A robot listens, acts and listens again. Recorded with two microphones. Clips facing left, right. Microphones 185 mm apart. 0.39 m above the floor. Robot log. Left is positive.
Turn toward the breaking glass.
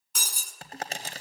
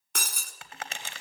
note: The breaking glass: about 65° right or 115° right.
cmd yaw -65
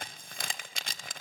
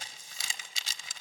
cmd idle
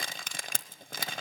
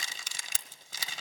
end: I heard breaking glass, but can't make it out now. It was about straight ahead or 50° right.